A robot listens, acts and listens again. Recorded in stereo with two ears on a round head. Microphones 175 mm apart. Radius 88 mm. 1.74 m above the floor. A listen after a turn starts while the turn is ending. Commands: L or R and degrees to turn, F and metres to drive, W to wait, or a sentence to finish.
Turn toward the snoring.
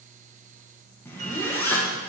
W
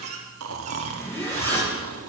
R90
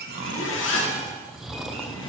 Facing the snoring.